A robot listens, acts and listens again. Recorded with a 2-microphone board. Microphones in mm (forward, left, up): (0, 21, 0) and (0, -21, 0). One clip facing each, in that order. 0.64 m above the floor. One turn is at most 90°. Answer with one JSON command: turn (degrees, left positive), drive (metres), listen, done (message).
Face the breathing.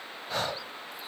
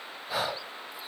{"turn": -30}
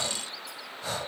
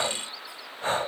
{"turn": -90}
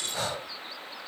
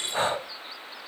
{"turn": -35}
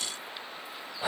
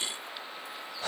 {"turn": 20}
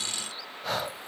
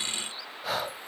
{"done": "Found it: breathing, straight ahead."}